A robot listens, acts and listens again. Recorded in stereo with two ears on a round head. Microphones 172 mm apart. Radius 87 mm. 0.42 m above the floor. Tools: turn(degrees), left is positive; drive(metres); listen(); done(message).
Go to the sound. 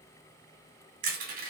turn(degrees=-45)
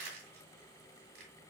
turn(degrees=-75)
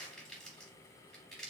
drive(metres=1.0)
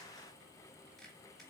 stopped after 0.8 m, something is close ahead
listen()
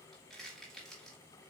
done("Arrived at the crushing, straight ahead.")